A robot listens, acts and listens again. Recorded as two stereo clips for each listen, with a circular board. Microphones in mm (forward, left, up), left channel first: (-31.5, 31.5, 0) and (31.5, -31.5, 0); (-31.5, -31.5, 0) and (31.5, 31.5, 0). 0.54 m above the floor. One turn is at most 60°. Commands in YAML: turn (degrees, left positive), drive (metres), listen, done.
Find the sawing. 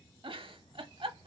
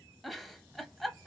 listen: true
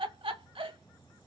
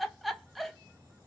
listen: true
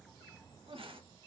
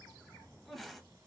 done: "I can't make out sawing to turn to."